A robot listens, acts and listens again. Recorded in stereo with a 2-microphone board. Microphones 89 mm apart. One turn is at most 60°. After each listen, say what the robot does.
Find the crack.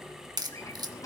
Turn 50° right.
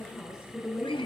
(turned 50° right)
Keep listening.
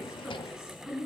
I heard a crack, but can't make it out now. It was about straight ahead or 80° right.